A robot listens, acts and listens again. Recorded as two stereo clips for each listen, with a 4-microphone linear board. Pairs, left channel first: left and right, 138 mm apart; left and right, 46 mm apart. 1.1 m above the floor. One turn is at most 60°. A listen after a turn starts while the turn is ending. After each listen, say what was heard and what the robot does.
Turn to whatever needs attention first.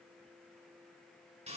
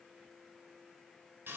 Keep listening.
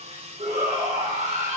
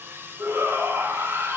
The shout: about 65° right or 115° right. Turn 60° right.
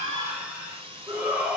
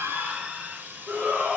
So it is at 15° right. Turn 15° right.
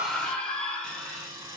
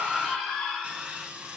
The shout is now 10° left. Turn 10° left.
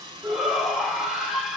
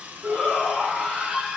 Facing the shout.